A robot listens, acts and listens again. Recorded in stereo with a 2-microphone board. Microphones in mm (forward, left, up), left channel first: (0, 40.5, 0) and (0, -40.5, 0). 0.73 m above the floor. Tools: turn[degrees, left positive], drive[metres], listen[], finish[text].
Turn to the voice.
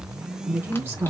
Thought: The woman speaking: about 25° right or 155° right.
Action: turn[-25]
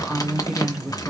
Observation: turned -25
Action: finish[Found it: a woman speaking, straight ahead, 2 to 4 m away.]